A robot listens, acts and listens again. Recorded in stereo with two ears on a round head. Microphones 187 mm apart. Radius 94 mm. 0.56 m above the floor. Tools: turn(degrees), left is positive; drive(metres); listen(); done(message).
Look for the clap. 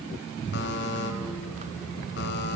listen()
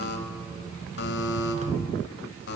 listen()
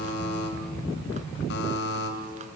done("I can't make out a clap to turn to.")